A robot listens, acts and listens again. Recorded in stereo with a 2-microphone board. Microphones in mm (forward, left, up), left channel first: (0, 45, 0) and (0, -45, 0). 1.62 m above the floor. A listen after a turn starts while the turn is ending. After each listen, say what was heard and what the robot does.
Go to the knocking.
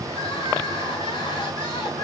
Keep listening.
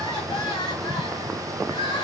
Keep listening.
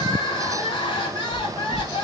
The knocking: about 15° left or 165° left. Turn 15° left.
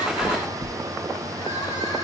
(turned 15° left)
Drive 1.0 m forward.
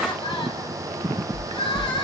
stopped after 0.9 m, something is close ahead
The knocking is now 10° left. Turn 10° left.
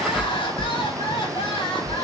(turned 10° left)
Arrived at the knocking, straight ahead.